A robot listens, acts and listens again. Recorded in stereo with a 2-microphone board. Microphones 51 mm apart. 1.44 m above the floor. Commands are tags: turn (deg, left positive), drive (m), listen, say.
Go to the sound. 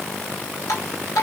<turn deg="75"/>
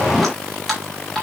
<drive m="1.0"/>
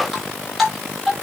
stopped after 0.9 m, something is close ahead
<say>Something is in my way. I am facing the dripping but have not reached it.</say>